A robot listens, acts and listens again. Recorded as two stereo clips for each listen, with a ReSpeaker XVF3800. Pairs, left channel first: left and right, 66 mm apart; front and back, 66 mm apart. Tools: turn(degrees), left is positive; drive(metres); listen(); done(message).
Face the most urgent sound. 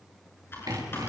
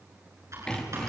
listen()
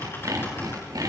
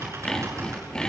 listen()
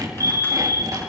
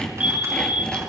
turn(degrees=-110)
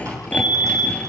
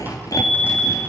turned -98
turn(degrees=-15)
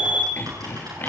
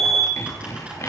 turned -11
done("Found it: a fire alarm, straight ahead, 2 to 4 m away.")